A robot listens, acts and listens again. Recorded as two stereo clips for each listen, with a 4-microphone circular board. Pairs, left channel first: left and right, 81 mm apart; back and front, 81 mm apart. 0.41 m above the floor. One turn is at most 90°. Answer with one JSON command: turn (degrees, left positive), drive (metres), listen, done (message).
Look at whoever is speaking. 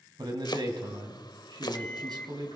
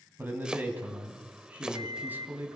{"turn": -65}
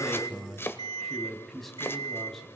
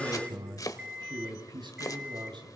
{"done": "Found it: a man speaking, straight ahead, 2 to 4 m away."}